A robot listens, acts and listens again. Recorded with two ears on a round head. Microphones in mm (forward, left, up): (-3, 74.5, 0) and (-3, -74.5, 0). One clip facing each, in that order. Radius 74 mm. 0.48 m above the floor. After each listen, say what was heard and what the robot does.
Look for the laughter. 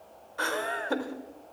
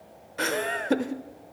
The laughter: about 25° right or 155° right. Turn 25° right.
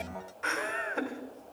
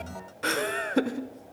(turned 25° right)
So it is at 125° right. Turn 125° right.
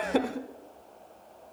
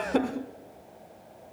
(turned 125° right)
Facing the laughter.